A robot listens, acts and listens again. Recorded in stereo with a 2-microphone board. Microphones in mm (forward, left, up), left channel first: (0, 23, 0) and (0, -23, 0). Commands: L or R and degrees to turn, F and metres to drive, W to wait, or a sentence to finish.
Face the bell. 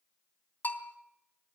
L40
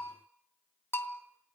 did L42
L90
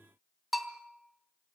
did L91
Found it: a bell, straight ahead, 2 to 4 m away.